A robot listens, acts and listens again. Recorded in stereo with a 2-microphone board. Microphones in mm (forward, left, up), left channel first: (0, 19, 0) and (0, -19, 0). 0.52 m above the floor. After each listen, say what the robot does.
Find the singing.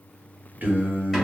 Turn 50° right.
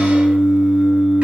Turn 15° right.
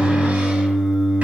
Facing the singing.